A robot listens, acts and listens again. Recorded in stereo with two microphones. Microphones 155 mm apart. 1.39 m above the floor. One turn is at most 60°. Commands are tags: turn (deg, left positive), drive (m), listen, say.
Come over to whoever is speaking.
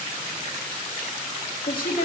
<turn deg="60"/>
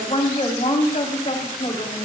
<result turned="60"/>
<turn deg="50"/>
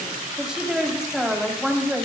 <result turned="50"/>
<drive m="1.0"/>
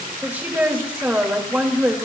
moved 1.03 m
<turn deg="-15"/>
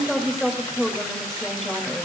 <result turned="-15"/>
<drive m="1.0"/>
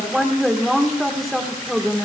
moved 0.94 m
<drive m="1.0"/>
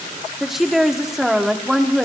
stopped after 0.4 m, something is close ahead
<say>I am next to the woman speaking.</say>